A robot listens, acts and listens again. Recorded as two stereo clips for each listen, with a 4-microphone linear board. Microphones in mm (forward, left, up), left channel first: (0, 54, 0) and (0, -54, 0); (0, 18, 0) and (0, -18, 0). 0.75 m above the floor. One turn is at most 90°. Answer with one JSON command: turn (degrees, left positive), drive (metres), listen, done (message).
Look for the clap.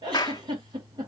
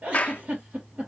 {"turn": 40}
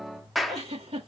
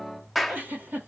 {"done": "Facing the clap, under 1 m away."}